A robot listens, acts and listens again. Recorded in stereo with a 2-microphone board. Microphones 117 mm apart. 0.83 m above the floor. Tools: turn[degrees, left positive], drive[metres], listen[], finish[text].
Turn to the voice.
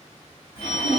Thought: The child speaking: about 40° left or 140° left.
Action: turn[40]
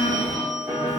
Thought: So it is at 100° left.
Action: turn[100]
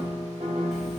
Action: listen[]
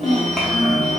Action: finish[Facing the child speaking, 1 to 2 m away.]